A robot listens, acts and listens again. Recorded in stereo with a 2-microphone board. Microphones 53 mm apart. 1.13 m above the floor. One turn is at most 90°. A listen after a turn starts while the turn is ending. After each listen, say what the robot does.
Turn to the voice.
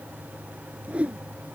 Keep listening.
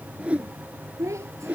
Turn 90° right.
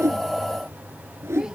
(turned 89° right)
Keep listening.
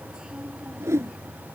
Keep listening.
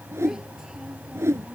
I heard a child speaking from this way, but can't make it out now.